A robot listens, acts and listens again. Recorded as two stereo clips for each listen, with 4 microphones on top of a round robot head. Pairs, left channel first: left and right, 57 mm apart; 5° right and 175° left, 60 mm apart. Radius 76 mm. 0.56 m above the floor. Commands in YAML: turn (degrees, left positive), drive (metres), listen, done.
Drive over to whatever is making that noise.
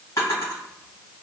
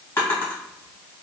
turn: 50
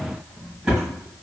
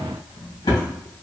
turn: -10
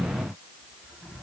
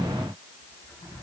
listen: true
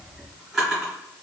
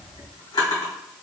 drive: 1.0
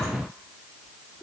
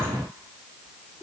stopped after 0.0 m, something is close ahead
listen: true
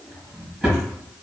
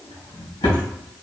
done: "Something is in my way. I am facing the drawer but have not reached it."